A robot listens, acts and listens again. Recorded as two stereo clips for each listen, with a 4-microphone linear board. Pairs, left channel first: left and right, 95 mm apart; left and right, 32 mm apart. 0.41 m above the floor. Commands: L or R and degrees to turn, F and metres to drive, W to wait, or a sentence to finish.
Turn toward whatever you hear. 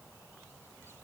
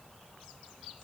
W
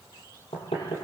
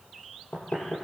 L90
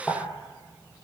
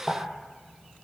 L10
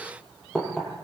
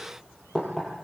Found it: knocking, straight ahead.